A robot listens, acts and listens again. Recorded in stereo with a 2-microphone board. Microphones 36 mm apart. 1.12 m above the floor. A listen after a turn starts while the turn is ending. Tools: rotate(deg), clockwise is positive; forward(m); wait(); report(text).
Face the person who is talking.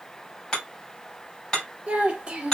rotate(20)
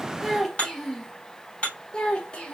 rotate(-35)
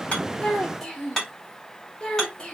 rotate(-25)
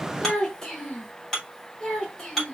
rotate(-20)
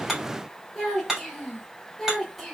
report("Found it: a child speaking, straight ahead, 1 to 2 m away.")